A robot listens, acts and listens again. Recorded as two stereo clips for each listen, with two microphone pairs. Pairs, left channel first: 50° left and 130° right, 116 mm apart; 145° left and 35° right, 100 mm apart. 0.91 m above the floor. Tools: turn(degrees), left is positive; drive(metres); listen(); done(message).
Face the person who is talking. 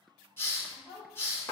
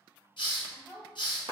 turn(degrees=40)
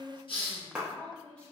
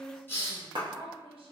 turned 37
turn(degrees=-30)
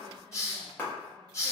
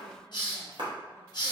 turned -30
listen()
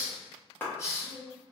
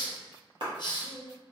turn(degrees=-35)
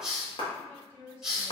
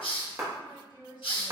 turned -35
turn(degrees=-10)
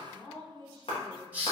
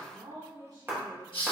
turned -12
done("Found it: a woman speaking, straight ahead, 1 to 2 m away.")